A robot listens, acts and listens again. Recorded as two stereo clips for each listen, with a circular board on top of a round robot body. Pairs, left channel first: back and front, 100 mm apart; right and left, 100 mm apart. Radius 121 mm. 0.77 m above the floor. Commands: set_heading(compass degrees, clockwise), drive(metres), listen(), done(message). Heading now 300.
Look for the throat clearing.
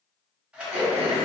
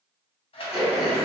done("Facing the throat clearing, under 1 m away.")